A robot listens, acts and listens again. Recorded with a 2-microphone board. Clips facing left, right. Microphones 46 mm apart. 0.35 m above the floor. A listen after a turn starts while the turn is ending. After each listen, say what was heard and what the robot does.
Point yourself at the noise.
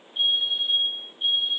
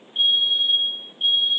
The fire alarm: about 60° right or 120° right. Turn 60° right.
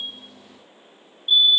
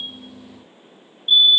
So it is at 40° right. Turn 40° right.
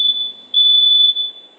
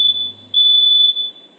Found it: a fire alarm, straight ahead, 2 to 4 m away.